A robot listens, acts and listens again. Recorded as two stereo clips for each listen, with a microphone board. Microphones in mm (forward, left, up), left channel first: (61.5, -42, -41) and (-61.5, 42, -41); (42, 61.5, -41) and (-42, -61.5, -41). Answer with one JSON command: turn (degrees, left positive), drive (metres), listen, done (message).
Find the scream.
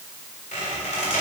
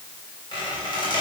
{"listen": true}
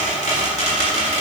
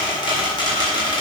{"listen": true}
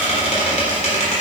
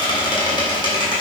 {"done": "I can't make out a scream, only a squeak."}